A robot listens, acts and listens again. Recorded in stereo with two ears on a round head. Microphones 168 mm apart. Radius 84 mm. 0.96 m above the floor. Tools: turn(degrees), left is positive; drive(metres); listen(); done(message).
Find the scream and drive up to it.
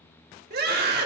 turn(degrees=-55)
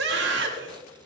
turn(degrees=-70)
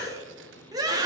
turn(degrees=-20)
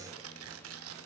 listen()
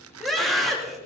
drive(metres=1.0)
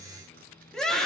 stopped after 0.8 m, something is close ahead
done("Blocked. The scream is further on, straight ahead.")